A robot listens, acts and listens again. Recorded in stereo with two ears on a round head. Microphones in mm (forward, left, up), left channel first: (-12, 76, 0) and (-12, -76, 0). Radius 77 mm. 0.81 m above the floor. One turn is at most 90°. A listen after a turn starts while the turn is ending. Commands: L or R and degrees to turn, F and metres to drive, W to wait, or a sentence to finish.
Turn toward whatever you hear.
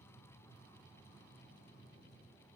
W
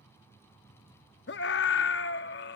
L70
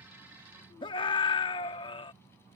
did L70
L30
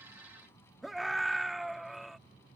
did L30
Found it: a scream, straight ahead.